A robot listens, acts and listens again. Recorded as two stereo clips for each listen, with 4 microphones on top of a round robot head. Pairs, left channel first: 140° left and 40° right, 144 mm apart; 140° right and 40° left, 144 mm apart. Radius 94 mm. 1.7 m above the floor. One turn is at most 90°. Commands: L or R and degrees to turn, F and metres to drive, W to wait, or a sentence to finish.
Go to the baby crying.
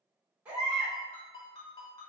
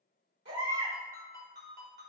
L40
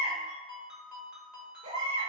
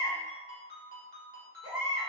F1.0
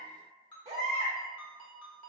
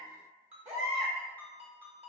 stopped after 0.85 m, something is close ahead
I am next to the baby crying.